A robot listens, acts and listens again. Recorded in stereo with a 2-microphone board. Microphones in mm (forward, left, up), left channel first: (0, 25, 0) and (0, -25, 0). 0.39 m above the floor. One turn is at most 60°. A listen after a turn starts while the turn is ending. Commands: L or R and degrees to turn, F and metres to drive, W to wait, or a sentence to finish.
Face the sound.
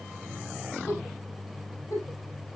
L60
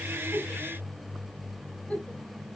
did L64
L20
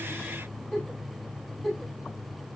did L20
Found it: a giggle, straight ahead, over 4 m away.